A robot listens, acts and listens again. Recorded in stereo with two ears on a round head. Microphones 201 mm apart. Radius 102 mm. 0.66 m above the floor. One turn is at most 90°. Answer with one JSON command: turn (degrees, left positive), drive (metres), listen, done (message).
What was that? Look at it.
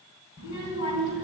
{"turn": 65}
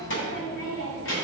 {"turn": 60}
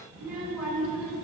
{"done": "Facing the child speaking, over 4 m away."}